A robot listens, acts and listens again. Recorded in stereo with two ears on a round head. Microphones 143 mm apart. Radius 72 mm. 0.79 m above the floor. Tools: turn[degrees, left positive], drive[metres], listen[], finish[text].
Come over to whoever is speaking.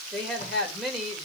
Action: turn[30]
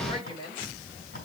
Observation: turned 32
Thought: So it is at 145° left.
Action: turn[145]
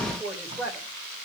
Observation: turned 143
Action: drive[1.0]
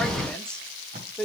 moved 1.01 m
Action: drive[1.0]
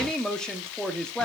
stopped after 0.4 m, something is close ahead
Action: finish[Arrived at the woman speaking, straight ahead.]